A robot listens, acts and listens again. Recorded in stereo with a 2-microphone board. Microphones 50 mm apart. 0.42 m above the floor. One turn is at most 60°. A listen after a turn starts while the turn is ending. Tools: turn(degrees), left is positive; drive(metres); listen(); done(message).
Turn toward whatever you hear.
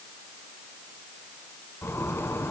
turn(degrees=60)
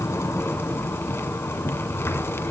turn(degrees=55)
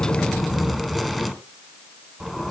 done("Found it: a zipper, straight ahead, 2 to 4 m away.")